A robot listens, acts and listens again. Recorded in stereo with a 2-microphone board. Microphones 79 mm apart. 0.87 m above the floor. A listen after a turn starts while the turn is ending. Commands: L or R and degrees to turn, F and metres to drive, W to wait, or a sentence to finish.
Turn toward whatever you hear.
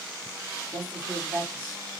R20
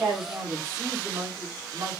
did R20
R140
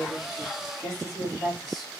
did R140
Found it: a woman speaking, straight ahead, 2 to 4 m away.